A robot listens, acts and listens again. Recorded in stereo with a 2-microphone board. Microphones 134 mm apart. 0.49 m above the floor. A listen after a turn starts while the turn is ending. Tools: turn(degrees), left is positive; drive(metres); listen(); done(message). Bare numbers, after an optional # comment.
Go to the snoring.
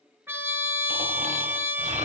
# The snoring: about 70° right or 110° right.
turn(-70)
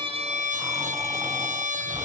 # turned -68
# So it is at 20° right.
turn(-20)
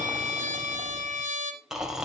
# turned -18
drive(1.0)
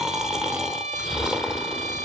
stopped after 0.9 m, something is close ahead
done("Arrived at the snoring, straight ahead.")